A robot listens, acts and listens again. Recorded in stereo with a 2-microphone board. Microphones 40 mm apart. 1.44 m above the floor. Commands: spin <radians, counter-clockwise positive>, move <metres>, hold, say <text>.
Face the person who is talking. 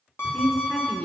spin 0.26
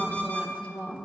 spin 2.53
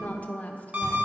spin 0.70
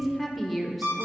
say Facing the woman speaking.